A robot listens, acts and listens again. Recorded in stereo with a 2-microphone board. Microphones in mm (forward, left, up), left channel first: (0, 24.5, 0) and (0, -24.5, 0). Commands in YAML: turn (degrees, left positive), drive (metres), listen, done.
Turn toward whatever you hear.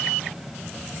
listen: true
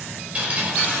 turn: -25
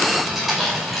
done: "Found it: dripping, straight ahead, over 4 m away."